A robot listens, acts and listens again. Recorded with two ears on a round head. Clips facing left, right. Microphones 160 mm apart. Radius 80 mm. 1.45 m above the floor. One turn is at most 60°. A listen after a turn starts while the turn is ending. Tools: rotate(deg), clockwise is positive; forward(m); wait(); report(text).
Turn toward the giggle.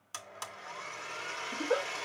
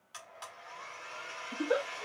rotate(20)
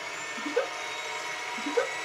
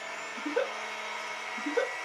report("Facing the giggle, 1 to 2 m away.")